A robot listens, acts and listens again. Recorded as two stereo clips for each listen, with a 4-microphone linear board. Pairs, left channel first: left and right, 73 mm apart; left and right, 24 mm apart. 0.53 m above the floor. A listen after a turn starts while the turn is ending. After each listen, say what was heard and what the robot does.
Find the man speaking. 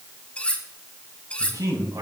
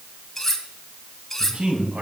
The man speaking: about 65° right or 115° right. Turn 65° right.
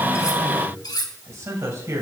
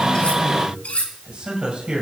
So it is at 45° right. Turn 45° right.
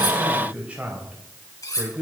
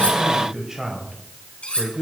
The man speaking is now 30° right. Turn 30° right.
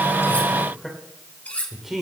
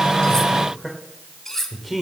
Facing the man speaking.